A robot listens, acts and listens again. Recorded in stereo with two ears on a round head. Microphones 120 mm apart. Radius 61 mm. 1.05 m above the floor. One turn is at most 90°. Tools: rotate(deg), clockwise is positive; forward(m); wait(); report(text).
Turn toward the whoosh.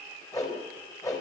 rotate(-25)
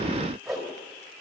report("Found it: a whoosh, straight ahead, 2 to 4 m away.")